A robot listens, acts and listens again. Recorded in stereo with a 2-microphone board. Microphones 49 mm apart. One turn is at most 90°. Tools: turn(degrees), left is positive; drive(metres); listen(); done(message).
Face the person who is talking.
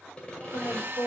turn(degrees=60)
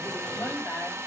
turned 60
listen()
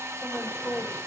turn(degrees=55)
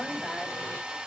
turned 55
listen()
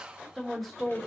done("Found it: a woman speaking, straight ahead, 2 to 4 m away.")